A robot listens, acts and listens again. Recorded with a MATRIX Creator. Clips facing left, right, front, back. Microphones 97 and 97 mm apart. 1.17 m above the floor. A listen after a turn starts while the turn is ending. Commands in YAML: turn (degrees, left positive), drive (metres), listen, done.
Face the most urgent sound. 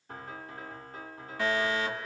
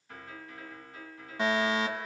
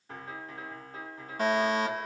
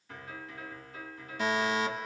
turn: -25
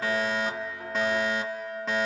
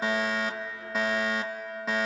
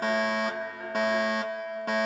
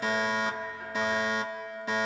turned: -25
done: "Facing the fire alarm."